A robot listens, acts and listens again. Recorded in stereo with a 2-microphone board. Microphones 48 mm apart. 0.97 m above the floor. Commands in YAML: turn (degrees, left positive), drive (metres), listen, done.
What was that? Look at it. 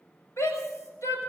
turn: 70
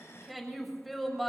done: "Found it: a shout, straight ahead."